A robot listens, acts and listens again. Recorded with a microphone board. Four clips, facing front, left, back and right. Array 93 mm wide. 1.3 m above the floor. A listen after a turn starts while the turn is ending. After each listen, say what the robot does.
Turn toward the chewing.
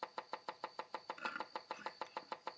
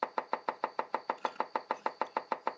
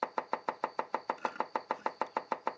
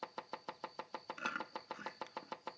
Turn 75° right.
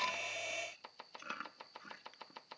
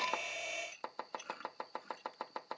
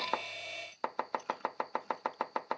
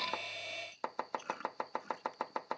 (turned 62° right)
Turn 15° right.
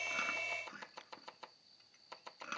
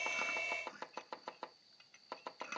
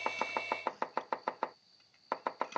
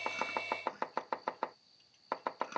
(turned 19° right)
Facing the chewing.